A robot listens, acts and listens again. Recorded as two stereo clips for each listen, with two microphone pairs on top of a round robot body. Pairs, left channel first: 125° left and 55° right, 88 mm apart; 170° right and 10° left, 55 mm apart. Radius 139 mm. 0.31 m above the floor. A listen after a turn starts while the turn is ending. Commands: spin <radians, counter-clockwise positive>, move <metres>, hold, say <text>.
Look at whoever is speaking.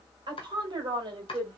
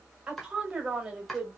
spin -1.05
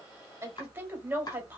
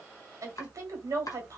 spin 0.17
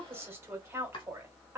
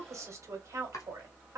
say Found it: a woman speaking, straight ahead, 1 to 2 m away.